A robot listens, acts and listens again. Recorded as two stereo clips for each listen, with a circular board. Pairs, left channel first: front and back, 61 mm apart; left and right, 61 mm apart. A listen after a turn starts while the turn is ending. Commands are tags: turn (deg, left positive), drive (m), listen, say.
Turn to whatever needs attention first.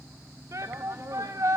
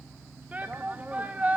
<turn deg="-155"/>
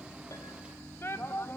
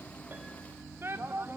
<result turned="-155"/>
<turn deg="-45"/>
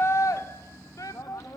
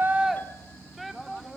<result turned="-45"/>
<say>Found it: a shout, straight ahead, 1 to 2 m away.</say>